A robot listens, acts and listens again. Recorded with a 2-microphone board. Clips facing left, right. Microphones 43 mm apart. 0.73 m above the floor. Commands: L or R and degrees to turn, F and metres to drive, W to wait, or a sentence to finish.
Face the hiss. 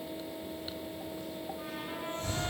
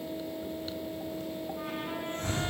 R60
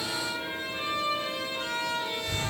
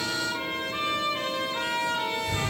Found it: a hiss, straight ahead.